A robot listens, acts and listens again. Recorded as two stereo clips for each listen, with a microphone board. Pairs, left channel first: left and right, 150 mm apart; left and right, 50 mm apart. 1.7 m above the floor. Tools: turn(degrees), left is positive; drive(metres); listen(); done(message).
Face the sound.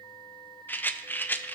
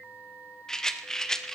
turn(degrees=30)
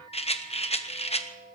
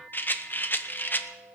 turn(degrees=135)
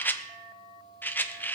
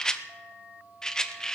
turn(degrees=15)
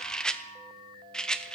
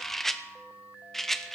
done("Facing the rattle.")